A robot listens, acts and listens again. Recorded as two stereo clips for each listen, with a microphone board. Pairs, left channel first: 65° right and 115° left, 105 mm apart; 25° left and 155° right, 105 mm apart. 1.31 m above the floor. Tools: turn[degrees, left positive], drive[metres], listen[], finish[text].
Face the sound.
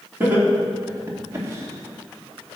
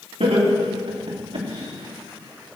Thought: The laughter: 175° left.
Action: turn[175]
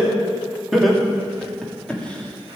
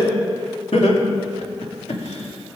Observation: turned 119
Thought: The laughter is now 15° left.
Action: turn[15]
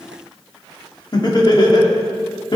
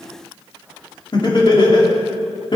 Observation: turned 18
Thought: The laughter is now 20° right.
Action: turn[-20]
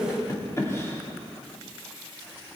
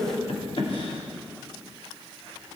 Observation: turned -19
Action: finish[Facing the laughter.]